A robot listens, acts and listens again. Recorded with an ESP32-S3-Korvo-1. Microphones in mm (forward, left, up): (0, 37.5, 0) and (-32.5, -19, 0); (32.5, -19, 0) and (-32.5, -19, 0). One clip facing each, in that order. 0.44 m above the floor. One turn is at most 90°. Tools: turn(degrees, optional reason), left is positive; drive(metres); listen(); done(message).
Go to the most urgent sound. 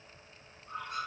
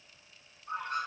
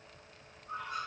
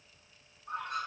listen()
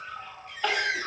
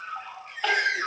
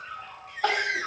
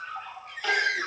turn(degrees=-30, reason="The crying: 30° right.")
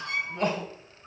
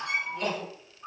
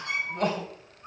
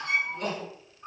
drive(metres=1.0)
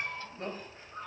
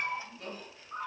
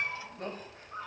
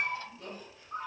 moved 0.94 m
turn(degrees=20, reason="The crying is now 20° left.")
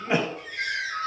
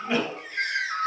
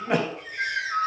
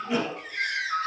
drive(metres=1.0)
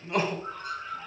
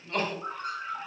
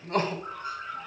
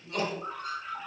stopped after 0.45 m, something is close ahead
turn(degrees=-10, reason="The crying is now 10° right.")
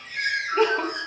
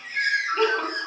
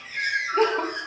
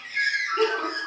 done("Arrived at the crying, straight ahead.")